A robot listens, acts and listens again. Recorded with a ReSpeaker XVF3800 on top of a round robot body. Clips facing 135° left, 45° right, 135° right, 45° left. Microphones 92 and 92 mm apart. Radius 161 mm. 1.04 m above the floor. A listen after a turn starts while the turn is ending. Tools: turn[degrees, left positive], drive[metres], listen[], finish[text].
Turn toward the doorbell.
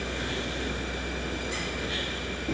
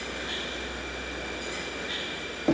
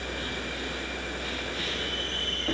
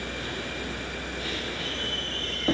Action: listen[]
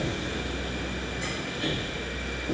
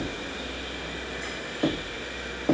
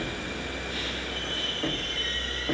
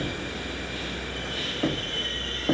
Action: listen[]
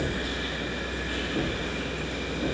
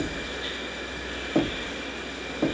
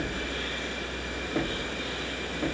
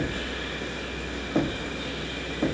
Action: finish[I can't make out a doorbell to turn to.]